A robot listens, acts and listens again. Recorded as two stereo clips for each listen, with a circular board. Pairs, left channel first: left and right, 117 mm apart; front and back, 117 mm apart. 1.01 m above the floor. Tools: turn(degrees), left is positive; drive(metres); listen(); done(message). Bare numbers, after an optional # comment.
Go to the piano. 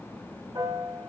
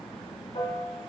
# The piano: 35° right.
turn(-35)
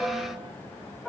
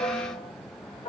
drive(1.0)
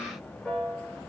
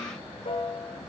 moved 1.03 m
drive(1.0)
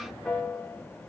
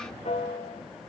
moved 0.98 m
# The piano is now 10° left.
turn(10)
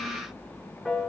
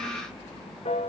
drive(1.0)
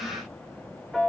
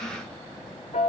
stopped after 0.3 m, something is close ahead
done("I am next to the piano.")